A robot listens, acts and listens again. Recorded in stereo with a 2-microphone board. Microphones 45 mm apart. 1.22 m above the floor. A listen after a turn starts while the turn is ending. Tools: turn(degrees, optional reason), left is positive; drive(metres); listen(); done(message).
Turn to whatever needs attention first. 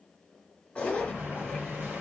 listen()
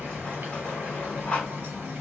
listen()
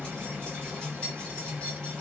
done("I can't make out anything urgent to turn to.")